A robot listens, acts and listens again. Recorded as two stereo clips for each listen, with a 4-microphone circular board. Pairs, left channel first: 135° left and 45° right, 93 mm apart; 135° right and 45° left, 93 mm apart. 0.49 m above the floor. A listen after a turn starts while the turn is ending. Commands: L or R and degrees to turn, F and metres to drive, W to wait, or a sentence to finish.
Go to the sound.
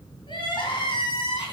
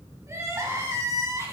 L100
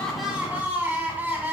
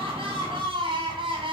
L20
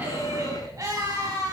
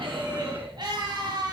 F1.0
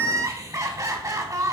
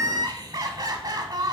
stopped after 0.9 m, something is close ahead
I am next to the crying.